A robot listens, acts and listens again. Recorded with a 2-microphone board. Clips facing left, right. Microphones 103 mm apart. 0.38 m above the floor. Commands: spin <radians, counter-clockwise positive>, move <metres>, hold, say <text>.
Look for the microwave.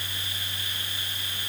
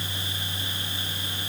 hold
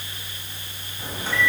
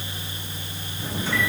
spin 0.87
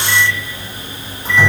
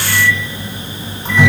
spin 0.17
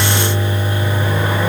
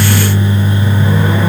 say Found it: a microwave, straight ahead.